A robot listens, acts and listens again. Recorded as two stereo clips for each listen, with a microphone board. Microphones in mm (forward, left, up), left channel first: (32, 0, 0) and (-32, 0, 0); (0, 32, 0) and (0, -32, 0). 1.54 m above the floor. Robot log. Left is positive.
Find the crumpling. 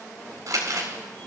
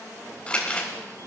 note: The crumpling: 160° left.
cmd yaw +160
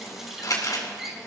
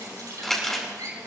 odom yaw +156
end: Found it: crumpling, straight ahead.